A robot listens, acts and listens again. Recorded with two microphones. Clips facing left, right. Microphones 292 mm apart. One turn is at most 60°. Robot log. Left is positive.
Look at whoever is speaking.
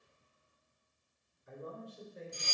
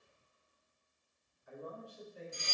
note: The man speaking: about 25° left or 155° left.
cmd yaw +25
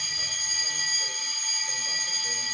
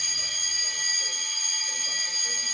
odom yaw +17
cmd idle
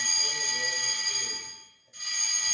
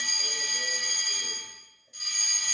cmd idle
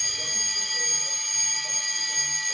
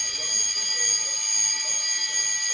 end: I heard a man speaking, but can't make it out now. It was about 5° left or 140° left.